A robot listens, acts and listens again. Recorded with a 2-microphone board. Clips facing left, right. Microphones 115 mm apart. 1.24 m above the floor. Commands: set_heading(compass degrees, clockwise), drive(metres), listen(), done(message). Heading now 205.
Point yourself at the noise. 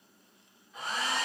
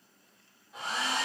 set_heading(295)
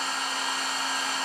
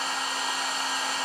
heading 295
done("Found it: a hair dryer, straight ahead, 1 to 2 m away.")